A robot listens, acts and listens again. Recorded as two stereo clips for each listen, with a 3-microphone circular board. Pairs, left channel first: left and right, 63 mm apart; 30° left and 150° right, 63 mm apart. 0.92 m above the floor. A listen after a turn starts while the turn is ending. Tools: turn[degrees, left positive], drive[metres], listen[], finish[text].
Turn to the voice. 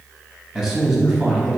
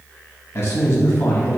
Action: finish[Found it: a man speaking, straight ahead, under 1 m away.]